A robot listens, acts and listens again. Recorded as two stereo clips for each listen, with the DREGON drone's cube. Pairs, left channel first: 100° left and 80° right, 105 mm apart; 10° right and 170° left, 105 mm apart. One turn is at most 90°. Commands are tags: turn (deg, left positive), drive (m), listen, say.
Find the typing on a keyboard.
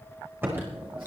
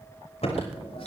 <turn deg="-10"/>
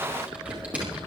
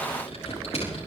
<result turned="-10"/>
<say>Found it: typing on a keyboard, straight ahead, over 4 m away.</say>